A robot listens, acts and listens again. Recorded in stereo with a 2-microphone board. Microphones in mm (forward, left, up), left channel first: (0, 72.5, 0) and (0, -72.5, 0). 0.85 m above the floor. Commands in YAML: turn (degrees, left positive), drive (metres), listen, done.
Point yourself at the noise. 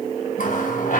turn: 65
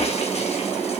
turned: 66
listen: true
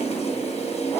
listen: true
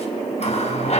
turn: 45
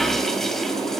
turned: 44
listen: true
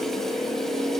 listen: true
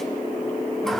done: "Facing where the running tap came from. I can't hear it now."